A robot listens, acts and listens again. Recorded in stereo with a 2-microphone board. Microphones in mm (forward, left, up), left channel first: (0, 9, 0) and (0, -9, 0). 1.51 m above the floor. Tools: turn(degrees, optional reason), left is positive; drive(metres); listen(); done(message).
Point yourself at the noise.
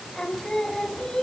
turn(degrees=40, reason="The singing: about 40° left or 140° left.")
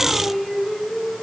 done("Found it: singing, straight ahead.")